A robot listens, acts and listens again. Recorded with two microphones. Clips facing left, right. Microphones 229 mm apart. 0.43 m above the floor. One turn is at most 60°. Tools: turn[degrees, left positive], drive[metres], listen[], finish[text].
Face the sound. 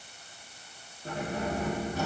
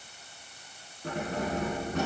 Action: turn[-60]
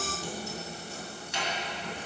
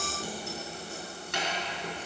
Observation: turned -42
Thought: So it is at 65° right.
Action: turn[-60]
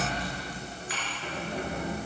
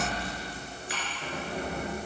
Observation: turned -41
Thought: The keys jangling is now 30° right.
Action: turn[-30]
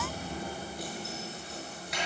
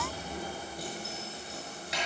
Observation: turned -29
Action: finish[Found it: keys jangling, straight ahead, over 4 m away.]